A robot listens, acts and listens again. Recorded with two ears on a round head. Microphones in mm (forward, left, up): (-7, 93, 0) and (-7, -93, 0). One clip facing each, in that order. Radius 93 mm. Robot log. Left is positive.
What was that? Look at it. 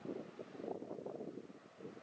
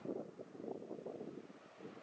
cmd idle
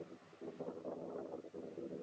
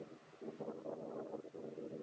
cmd idle
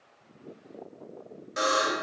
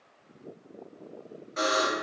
note: The buzzer: about 60° left or 120° left.
cmd yaw +60
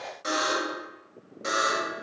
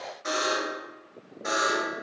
note: So it is at 50° left.
cmd yaw +50
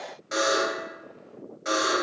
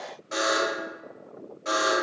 note: The buzzer is now 20° left.
cmd yaw +20
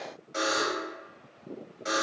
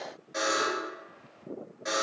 end: Facing the buzzer, 1 to 2 m away.